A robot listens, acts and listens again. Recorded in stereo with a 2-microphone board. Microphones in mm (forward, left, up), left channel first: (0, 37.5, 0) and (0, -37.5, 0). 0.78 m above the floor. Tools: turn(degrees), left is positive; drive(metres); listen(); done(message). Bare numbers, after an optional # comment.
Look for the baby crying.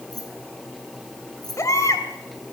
# The baby crying: about 40° left or 140° left.
turn(40)
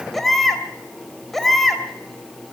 done("Found it: a baby crying, straight ahead, 2 to 4 m away.")